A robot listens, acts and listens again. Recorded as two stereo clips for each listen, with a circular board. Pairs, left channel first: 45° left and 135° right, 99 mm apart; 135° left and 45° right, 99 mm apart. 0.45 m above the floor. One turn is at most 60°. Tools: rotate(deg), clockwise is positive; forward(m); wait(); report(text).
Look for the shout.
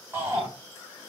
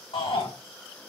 rotate(-60)
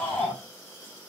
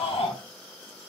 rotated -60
rotate(-60)
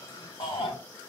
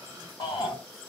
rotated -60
rotate(-60)
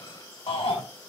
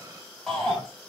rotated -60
rotate(-50)
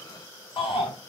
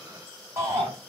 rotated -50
rotate(-15)
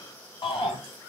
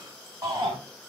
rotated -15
report("Found it: a shout, straight ahead, over 4 m away.")